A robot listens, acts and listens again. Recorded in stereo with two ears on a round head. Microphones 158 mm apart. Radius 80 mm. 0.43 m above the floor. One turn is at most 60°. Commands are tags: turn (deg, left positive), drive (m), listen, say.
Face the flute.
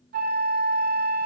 <turn deg="-55"/>
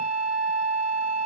<turn deg="-60"/>
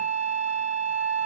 <turn deg="-60"/>
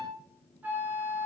<turn deg="-10"/>
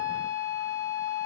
<say>Found it: a flute, straight ahead, 2 to 4 m away.</say>